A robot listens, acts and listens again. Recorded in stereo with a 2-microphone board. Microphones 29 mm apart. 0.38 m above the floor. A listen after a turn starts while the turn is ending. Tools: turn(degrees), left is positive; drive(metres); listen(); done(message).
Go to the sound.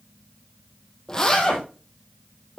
turn(degrees=20)
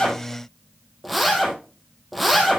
drive(metres=1.0)
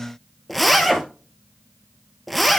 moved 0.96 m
drive(metres=1.0)
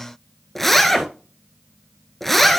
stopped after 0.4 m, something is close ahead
turn(degrees=10)
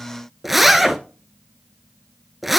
done("I am next to the zipper.")